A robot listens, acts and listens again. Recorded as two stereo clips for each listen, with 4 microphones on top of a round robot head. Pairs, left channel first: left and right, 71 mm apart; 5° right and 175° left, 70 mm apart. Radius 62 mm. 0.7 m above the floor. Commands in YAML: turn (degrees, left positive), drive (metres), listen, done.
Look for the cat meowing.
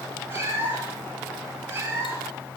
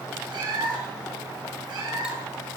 turn: -145
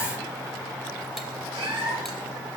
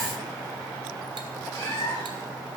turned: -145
turn: -65
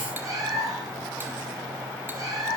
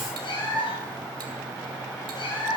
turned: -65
turn: -35
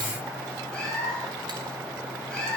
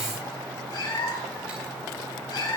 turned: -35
turn: 10
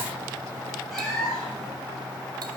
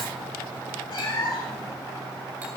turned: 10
done: "Found it: a cat meowing, straight ahead."